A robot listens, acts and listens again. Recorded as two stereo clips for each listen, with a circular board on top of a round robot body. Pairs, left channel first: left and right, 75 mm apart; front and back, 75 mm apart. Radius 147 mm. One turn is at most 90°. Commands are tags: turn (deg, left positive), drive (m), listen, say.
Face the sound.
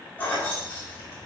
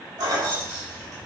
<turn deg="90"/>
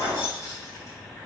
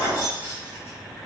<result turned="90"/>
<turn deg="55"/>
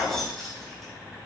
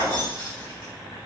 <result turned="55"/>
<say>Found it: keys jangling, straight ahead, 2 to 4 m away.</say>